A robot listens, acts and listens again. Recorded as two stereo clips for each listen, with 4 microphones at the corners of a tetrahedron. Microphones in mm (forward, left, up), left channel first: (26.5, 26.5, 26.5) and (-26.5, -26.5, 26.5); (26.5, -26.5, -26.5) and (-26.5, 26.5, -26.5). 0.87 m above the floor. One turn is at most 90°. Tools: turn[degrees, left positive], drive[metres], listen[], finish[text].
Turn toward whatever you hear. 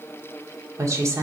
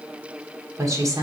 Thought: The woman speaking: 175° left.
Action: turn[90]
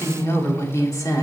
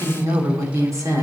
Thought: The woman speaking is now 85° left.
Action: turn[85]
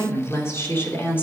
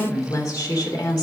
Thought: The woman speaking is now 15° right.
Action: turn[-15]
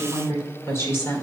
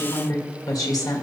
Thought: The woman speaking is now 15° right.
Action: turn[-15]
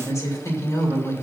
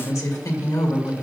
Action: finish[Found it: a woman speaking, straight ahead.]